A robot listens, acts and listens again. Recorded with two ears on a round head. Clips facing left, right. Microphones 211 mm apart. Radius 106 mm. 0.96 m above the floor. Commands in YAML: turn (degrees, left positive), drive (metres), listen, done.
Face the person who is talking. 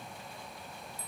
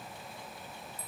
listen: true
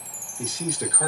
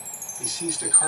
turn: 45
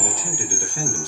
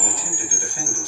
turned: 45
listen: true
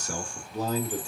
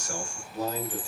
turn: 90
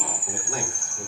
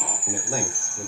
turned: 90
turn: -25
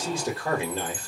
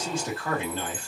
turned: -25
turn: 10
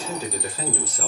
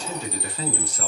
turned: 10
done: "Found it: a man speaking, straight ahead, 1 to 2 m away."